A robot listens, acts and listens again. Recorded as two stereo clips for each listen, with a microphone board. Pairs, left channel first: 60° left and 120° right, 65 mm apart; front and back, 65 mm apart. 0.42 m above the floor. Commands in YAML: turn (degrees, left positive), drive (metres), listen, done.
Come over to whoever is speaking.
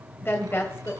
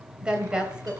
turn: 105
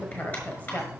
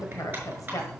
drive: 1.0
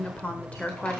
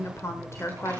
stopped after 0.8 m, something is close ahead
done: "I am next to the woman speaking."